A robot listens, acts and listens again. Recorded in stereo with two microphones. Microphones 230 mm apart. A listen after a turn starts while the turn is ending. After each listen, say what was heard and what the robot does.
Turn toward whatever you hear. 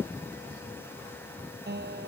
The guitar: about 45° right or 135° right. Turn 45° right.
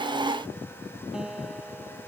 Facing the guitar.